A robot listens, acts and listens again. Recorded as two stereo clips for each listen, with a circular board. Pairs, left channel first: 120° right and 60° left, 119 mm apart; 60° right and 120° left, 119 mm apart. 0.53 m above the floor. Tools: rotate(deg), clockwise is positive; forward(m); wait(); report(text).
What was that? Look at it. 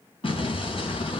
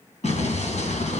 rotate(80)
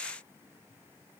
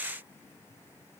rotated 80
report("Facing where the explosion came from. I can't hear it now.")